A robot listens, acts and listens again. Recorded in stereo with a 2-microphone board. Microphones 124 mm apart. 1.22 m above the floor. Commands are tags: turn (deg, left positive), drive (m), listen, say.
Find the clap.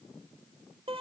<listen/>
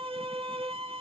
<listen/>
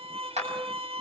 <turn deg="-60"/>
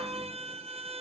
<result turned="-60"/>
<listen/>
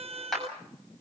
<say>Found it: a clap, straight ahead, over 4 m away.</say>